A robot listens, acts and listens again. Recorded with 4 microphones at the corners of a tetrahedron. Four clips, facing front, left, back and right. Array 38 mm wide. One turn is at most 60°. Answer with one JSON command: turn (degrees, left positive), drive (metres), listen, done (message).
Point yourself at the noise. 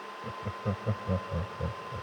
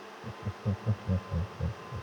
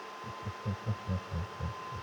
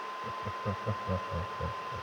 {"turn": -40}
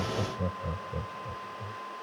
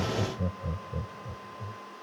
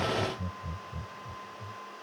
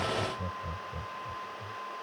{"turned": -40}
{"turn": 15}
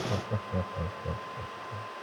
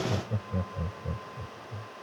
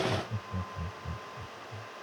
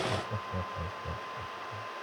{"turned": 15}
{"done": "Facing the laughter."}